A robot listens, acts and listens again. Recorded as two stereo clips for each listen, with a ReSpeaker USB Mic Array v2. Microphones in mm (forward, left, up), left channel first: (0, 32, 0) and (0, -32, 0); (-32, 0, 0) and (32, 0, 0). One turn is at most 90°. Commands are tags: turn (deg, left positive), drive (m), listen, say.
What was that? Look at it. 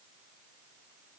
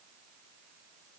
<listen/>
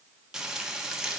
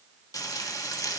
<turn deg="-90"/>
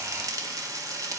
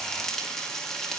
<turn deg="-90"/>
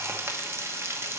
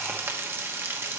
<turn deg="-50"/>
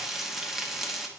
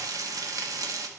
<say>Facing the frying.</say>